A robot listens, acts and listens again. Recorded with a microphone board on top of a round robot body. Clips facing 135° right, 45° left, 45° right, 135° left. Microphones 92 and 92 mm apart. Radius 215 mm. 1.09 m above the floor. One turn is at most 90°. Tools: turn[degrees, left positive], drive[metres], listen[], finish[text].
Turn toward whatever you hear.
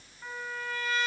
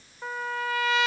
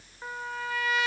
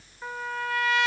Thought: The trumpet: 40° left.
Action: turn[40]
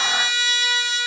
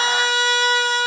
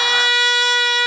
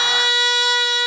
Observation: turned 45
Action: finish[Facing the trumpet.]